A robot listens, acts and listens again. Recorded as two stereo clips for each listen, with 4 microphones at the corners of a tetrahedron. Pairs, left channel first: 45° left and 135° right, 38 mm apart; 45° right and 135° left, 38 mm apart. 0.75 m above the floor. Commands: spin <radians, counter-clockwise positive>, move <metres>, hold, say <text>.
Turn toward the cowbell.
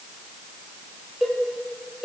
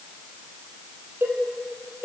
spin 2.53
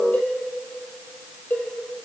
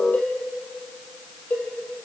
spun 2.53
say Found it: a cowbell, straight ahead, 2 to 4 m away.